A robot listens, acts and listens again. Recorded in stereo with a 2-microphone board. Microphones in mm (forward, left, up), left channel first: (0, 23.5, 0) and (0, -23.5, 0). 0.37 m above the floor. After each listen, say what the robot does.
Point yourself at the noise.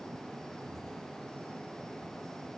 Keep listening.
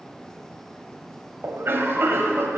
Turn 60° right.
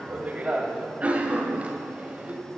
Turn 35° right.
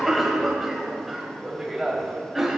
Found it: a cough, straight ahead.